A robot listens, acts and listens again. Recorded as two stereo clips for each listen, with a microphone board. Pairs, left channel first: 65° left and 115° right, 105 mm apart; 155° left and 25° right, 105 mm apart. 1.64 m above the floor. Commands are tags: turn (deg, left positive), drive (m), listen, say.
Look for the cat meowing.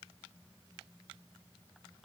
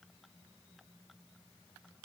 <listen/>
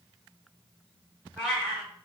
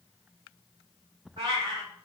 <turn deg="-20"/>
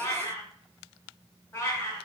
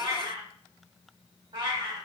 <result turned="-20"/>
<say>Found it: a cat meowing, straight ahead, 1 to 2 m away.</say>